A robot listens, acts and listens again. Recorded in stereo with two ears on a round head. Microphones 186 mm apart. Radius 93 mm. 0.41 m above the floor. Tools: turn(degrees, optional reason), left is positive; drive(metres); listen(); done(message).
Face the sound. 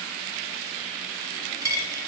turn(degrees=-15, reason="The dropped coin: about 15° right or 165° right.")
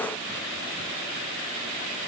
listen()
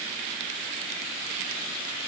done("I heard a dropped coin, but can't make it out now. It was about straight ahead or 150° right.")